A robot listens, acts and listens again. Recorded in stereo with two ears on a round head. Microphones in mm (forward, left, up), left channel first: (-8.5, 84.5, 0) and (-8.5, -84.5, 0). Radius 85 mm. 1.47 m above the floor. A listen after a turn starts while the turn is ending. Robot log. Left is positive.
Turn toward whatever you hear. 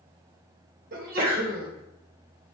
note: The sneeze: about 50° right or 130° right.
cmd yaw -50
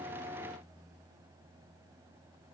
cmd idle
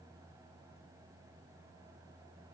end: I heard a sneeze, but can't make it out now. It was about straight ahead or 80° right.